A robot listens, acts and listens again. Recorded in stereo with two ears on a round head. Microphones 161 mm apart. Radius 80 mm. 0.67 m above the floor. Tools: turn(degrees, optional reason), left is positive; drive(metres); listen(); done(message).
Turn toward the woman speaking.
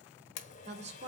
turn(degrees=-40, reason="The woman speaking: about 40° right or 140° right.")
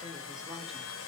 listen()
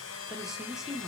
done("Facing the woman speaking, 1 to 2 m away.")